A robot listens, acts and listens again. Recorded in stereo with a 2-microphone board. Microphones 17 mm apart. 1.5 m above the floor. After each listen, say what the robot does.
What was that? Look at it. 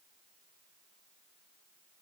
Keep listening.
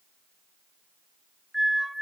Turn 25° right.
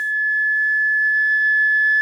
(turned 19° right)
Found it: a flute, straight ahead.